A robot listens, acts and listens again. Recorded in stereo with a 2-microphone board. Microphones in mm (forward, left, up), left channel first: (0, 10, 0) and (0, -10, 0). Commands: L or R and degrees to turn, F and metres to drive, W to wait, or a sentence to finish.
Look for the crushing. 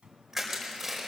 R30
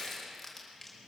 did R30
L15
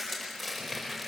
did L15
Found it: crushing, straight ahead.